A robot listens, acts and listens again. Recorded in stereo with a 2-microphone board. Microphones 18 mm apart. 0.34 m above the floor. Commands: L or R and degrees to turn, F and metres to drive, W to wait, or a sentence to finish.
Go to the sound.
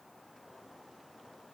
W
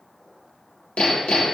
L90
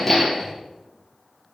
F1.0
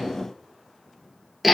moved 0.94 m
R10
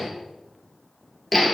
F1.0
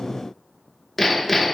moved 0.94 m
F1.0
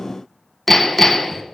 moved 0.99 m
L15
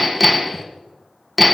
F1.0
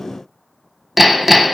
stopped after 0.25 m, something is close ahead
R10
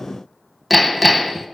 I am next to the hammering.